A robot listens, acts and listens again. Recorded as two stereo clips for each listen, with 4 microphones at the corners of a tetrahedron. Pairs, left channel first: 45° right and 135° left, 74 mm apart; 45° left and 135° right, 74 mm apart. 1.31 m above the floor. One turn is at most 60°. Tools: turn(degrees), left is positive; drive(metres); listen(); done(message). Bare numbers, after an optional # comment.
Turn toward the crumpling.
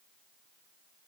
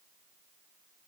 listen()
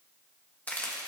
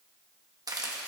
# The crumpling: 110° right.
turn(-60)
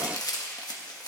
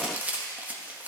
# The crumpling is now 70° right.
turn(-60)
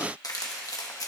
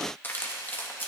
# The crumpling is now 15° right.
turn(-15)
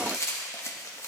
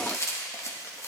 done("Facing the crumpling.")